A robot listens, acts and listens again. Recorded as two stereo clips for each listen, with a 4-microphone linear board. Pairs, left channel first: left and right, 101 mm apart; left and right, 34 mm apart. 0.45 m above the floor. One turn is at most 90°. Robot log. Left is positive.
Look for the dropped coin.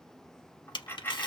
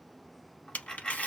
note: The dropped coin: about 20° left or 160° left.
cmd yaw +20
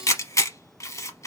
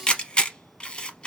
cmd idle
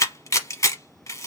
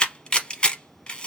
end: I heard a dropped coin, but can't make it out now. It was about straight ahead or 140° left.